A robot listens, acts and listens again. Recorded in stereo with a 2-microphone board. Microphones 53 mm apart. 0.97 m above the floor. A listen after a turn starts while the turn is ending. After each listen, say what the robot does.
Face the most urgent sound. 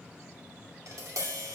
Keep listening.
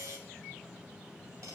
Keep listening.
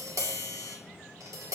I can't make out anything urgent, only tapping.